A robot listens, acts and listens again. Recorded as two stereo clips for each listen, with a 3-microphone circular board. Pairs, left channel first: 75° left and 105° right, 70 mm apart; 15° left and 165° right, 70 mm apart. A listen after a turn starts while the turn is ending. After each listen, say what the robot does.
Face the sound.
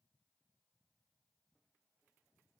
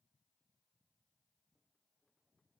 Keep listening.
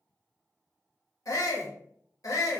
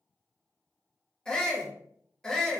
Turn 95° left.
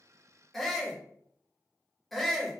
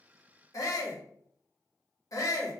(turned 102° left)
Turn 10° right.
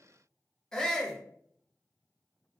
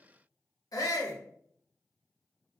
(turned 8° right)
Facing the shout.